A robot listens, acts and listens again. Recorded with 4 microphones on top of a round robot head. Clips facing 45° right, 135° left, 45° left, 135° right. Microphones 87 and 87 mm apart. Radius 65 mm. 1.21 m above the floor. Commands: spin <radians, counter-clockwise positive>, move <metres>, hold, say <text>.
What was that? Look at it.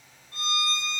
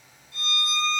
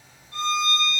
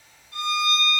say Facing the violin, 1 to 2 m away.